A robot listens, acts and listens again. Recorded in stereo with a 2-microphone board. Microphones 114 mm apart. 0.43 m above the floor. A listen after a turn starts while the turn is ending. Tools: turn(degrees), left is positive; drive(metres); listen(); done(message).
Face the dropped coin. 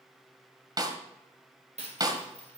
turn(degrees=-70)
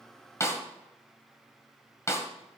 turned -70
listen()
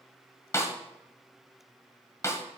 done("I heard a dropped coin, but can't make it out now. It was about straight ahead or 40° right.")